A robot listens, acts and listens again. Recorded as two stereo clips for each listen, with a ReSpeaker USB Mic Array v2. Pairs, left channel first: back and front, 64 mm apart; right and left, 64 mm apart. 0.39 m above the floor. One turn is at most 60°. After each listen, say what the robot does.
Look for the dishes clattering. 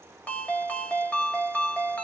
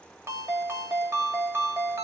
Keep listening.
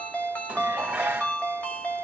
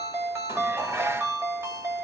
Turn 60° left.
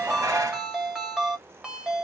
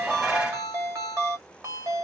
Turn 25° left.
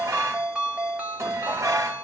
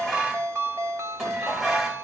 Turn 10° left.
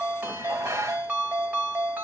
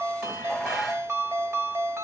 Facing the dishes clattering.